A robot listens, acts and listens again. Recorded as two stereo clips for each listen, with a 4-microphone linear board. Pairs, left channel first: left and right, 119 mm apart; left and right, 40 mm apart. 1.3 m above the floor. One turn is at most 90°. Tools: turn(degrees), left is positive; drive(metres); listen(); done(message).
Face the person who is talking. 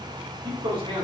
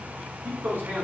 turn(degrees=-50)
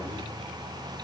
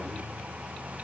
listen()
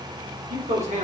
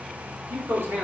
turn(degrees=-85)
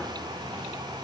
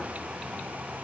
listen()
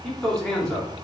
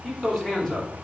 done("Facing the man speaking, 2 to 4 m away.")